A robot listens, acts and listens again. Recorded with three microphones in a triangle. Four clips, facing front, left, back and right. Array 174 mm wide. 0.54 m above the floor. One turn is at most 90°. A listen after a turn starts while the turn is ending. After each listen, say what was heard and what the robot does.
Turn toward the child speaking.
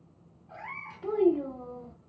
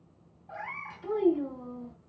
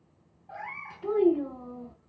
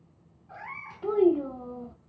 The child speaking: 85° right. Turn 85° right.
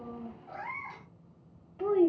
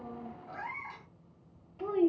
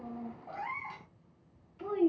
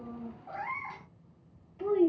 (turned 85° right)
The child speaking is now 15° left. Turn 15° left.
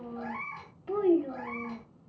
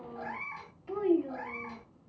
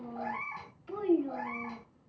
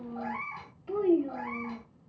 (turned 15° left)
Found it: a child speaking, straight ahead, under 1 m away.